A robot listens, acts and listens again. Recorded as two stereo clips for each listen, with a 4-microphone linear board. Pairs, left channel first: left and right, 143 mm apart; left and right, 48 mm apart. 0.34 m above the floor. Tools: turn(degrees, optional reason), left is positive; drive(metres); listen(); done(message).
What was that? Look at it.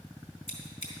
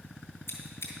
turn(degrees=60, reason="The scissors: about 60° left or 120° left.")
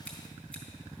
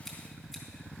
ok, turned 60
listen()
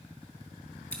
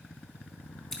turn(degrees=10, reason="So it is at 10° left.")
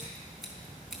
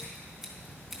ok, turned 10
done("Facing the scissors.")